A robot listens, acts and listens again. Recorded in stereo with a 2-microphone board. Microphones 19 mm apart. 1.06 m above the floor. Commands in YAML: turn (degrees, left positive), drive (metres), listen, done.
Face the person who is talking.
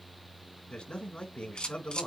turn: 70
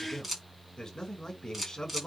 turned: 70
turn: 35
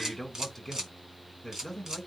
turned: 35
turn: 20
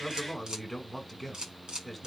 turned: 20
done: "Facing the man speaking."